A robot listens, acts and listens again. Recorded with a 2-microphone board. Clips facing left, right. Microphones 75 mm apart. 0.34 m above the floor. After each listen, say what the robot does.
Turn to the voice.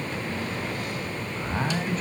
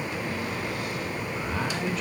Turn 40° left.
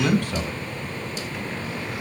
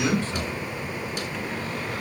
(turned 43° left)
Turn 90° left.
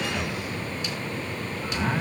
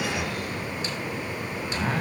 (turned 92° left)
Found it: a man speaking, straight ahead, 2 to 4 m away.